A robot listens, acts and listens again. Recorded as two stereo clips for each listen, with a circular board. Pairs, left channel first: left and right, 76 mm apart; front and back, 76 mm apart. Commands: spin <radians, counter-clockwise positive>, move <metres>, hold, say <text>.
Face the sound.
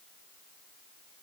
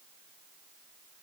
hold
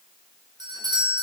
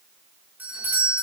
spin -2.01
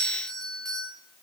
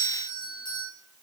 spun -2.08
say Facing the doorbell, over 4 m away.